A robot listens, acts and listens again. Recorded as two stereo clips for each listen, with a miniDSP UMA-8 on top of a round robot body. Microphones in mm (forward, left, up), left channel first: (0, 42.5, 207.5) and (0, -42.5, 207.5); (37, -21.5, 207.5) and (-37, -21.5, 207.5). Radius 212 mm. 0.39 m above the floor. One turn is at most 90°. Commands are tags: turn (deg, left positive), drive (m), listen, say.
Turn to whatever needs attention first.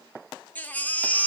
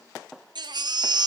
<turn deg="90"/>
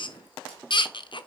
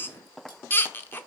<turn deg="60"/>
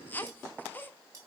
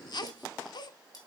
<turn deg="20"/>
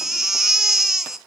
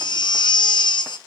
<say>Facing the baby crying.</say>